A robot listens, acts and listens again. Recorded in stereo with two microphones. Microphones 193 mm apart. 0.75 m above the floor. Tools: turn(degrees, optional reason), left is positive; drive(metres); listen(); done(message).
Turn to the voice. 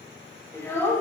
turn(degrees=30)
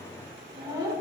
turn(degrees=-20, reason="So it is at 20° right.")
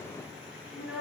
done("Facing the child speaking.")